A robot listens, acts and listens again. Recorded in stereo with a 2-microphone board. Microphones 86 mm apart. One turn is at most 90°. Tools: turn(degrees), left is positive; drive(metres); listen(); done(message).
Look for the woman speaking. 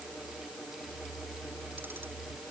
listen()
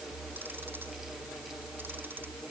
listen()
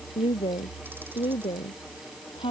turn(degrees=90)
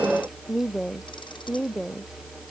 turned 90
done("Found it: a woman speaking, straight ahead.")